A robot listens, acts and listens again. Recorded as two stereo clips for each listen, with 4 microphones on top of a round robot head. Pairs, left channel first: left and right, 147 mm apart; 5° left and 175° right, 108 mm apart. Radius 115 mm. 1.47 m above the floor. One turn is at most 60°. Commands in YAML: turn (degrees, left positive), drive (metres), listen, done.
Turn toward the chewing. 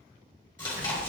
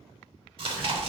turn: 60
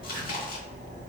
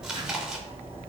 turn: 60
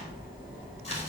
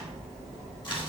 turn: 35
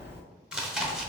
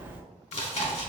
done: "Found it: chewing, straight ahead, 1 to 2 m away."